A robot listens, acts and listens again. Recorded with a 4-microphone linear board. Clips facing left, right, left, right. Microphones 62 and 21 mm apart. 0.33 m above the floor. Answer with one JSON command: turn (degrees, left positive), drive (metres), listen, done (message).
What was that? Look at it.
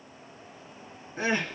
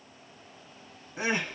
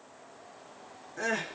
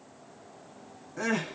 {"turn": -15}
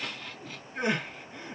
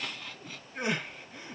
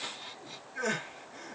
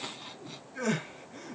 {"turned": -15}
{"done": "Found it: crying, straight ahead."}